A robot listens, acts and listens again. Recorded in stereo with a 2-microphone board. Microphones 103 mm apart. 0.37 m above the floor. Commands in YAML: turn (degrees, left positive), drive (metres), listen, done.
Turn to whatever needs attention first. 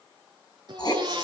turn: -45
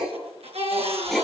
turn: -90
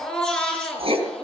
turn: 10
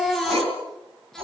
done: "Found it: a baby crying, straight ahead."